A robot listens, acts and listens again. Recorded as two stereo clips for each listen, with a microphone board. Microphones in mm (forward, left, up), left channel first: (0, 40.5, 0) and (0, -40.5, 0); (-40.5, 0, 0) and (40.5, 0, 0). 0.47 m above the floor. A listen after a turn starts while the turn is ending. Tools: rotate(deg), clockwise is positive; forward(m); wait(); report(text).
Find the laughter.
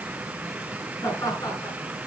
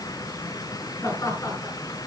rotate(-130)
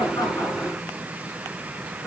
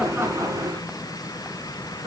wait()
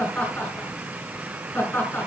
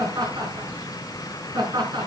rotate(-25)
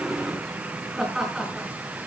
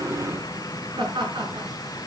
report("Facing the laughter, over 4 m away.")